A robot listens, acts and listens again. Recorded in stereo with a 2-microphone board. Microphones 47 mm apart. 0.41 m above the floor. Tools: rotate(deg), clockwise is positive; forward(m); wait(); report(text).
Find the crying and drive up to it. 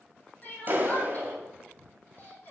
rotate(-40)
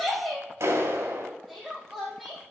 forward(1.0)
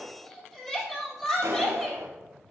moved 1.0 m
rotate(-10)
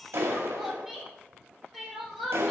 forward(1.0)
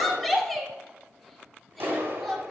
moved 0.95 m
forward(1.0)
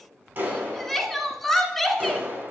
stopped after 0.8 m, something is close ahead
report("Arrived at the crying, straight ahead.")